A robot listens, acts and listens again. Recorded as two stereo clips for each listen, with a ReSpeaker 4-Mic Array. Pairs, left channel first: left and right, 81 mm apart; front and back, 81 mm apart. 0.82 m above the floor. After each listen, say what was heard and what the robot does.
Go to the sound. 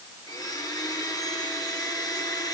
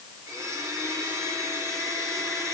The blender: 125° left. Turn 125° left.
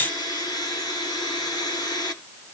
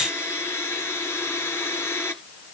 The blender is now 55° left. Turn 55° left.
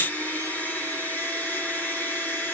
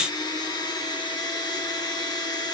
The blender is now 20° left. Turn 20° left.
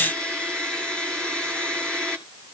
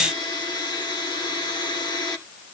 The blender is now 10° left. Turn 10° left.
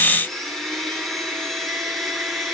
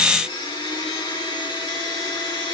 Drive 1.0 m forward.
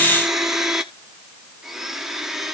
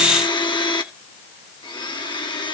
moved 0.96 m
Drive 1.0 m forward.
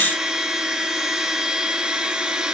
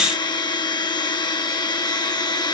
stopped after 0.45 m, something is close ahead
The blender is now 10° right. Turn 10° right.
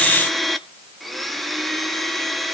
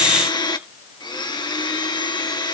Arrived at the blender, straight ahead.